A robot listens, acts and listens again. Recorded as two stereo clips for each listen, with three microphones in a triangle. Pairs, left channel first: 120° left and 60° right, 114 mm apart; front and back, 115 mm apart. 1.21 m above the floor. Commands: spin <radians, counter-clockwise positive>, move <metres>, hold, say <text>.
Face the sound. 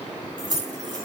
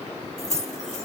spin -0.17
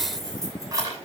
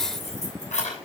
say Facing the keys jangling.